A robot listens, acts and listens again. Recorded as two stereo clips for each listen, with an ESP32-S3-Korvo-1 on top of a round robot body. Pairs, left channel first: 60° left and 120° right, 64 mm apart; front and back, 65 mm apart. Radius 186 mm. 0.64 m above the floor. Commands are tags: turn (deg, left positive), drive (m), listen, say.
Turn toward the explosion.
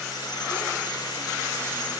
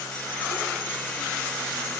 <listen/>
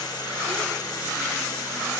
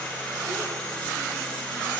<listen/>
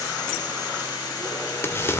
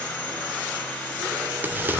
<turn deg="115"/>
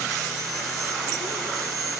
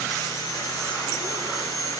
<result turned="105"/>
<turn deg="10"/>
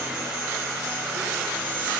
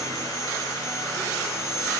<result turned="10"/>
<say>Facing where the explosion came from. I can't hear it now.</say>